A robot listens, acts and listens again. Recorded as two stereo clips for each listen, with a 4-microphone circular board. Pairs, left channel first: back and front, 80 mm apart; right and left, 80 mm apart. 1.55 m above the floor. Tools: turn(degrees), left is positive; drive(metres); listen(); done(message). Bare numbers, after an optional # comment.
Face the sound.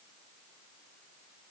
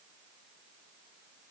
listen()
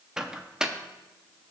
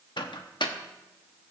# The microwave: 80° right.
turn(-80)
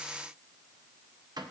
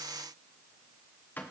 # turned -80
# The microwave is now 25° right.
turn(-25)
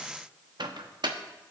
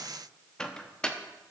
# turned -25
# The microwave is now 10° right.
turn(-10)
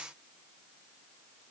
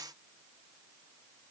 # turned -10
listen()
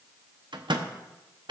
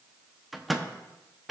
done("Found it: a microwave, straight ahead.")